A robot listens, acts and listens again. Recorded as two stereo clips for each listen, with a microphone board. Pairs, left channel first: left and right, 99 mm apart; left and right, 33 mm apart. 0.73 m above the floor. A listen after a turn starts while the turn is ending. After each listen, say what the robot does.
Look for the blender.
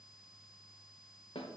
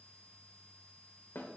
Keep listening.
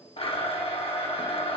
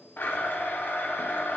Turn 70° left.
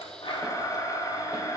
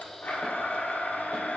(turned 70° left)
Turn 40° left.
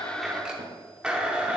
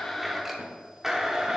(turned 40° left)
Turn 10° right.
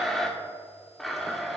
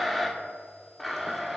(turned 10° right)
Found it: a blender, straight ahead, 1 to 2 m away.